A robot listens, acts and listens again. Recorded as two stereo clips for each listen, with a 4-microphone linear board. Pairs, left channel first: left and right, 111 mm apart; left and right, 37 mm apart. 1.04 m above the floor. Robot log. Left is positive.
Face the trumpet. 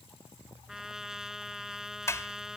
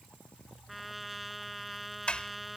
cmd yaw -30
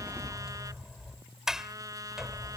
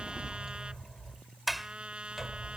note: So it is at 145° right.
cmd yaw -145
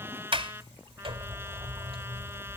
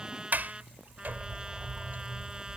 note: The trumpet is now 25° right.
cmd yaw -25
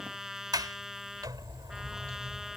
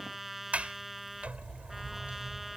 end: Facing the trumpet.